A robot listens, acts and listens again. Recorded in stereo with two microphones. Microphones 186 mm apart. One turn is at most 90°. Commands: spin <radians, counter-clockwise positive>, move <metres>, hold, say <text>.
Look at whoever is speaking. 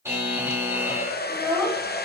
spin 0.52
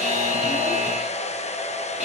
hold
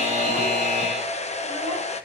hold
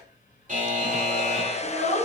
spin 1.57
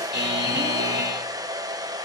spin 0.79
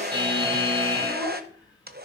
hold
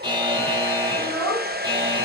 spin 0.44
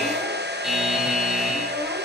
hold
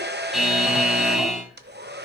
hold
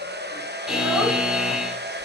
say Facing where the child speaking came from. I can't hear it now.